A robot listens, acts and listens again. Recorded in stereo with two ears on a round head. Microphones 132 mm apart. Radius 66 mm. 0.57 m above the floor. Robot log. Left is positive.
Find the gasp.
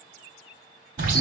cmd idle
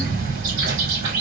cmd idle
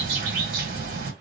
end: I can't make out a gasp, only a bird.